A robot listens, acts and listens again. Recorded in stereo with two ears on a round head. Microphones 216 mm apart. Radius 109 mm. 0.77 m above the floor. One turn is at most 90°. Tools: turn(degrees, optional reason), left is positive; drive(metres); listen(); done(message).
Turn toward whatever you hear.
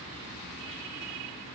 listen()
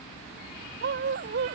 turn(degrees=-45, reason="The dog barking: about 45° right or 135° right.")
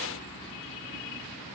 listen()
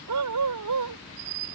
turn(degrees=-90, reason="So it is at 90° right.")
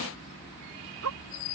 turn(degrees=-65, reason="The dog barking is now 65° right.")
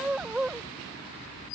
done("Found it: a dog barking, straight ahead.")